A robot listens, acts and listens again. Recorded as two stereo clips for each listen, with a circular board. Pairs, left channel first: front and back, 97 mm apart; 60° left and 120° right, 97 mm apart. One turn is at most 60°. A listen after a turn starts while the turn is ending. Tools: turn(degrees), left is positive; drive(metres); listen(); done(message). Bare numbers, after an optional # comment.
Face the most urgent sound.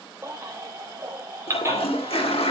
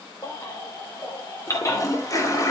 # The baby crying: 115° left.
turn(60)
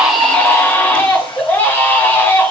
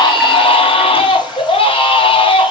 # The baby crying is now 70° left.
turn(60)
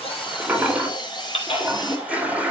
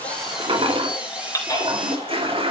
done("Facing the baby crying, 2 to 4 m away.")